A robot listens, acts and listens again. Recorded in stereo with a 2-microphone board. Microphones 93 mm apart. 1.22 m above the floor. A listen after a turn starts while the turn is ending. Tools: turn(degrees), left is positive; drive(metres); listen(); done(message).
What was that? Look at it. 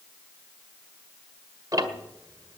turn(degrees=-40)
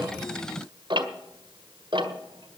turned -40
turn(degrees=-95)
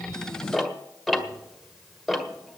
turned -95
done("Found it: ticking, straight ahead.")